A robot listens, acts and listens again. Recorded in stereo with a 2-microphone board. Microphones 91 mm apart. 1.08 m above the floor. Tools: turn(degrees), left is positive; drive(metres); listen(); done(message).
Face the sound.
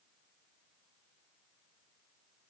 listen()
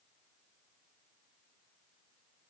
listen()
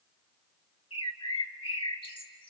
turn(degrees=65)
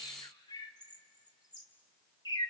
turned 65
turn(degrees=45)
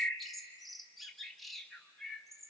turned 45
done("Facing the bird.")